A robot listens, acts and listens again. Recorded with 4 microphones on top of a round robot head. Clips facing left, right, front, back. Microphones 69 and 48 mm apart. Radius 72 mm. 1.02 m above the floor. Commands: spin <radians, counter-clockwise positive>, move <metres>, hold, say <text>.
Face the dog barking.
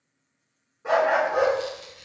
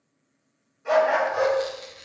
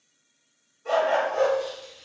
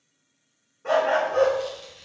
spin 2.36
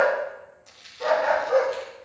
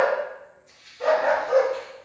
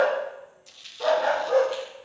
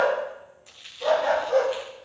say Found it: a dog barking, straight ahead, 2 to 4 m away.